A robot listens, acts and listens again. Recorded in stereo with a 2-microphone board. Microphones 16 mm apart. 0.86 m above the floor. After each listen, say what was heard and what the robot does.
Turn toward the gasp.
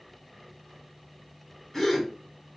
The gasp: about 30° left or 150° left. Turn 30° left.
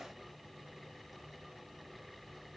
Keep listening.
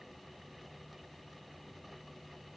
I heard a gasp, but can't make it out now. It was about straight ahead or 120° left.